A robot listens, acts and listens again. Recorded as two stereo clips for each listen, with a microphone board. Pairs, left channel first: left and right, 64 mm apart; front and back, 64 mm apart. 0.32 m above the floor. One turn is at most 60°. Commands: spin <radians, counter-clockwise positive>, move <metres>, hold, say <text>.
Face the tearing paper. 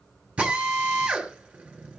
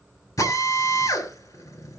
hold
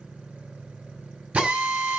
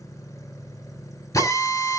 hold
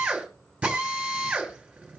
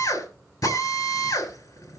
say I can't make out tearing paper to turn to.